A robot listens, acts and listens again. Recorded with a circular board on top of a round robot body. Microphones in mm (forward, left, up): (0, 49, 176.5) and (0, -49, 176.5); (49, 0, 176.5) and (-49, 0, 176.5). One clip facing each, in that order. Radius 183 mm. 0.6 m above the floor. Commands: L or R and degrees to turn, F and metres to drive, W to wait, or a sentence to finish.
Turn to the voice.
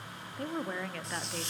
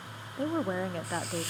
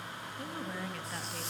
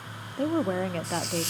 R150
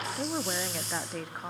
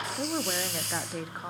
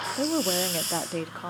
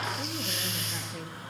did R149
Facing the woman speaking.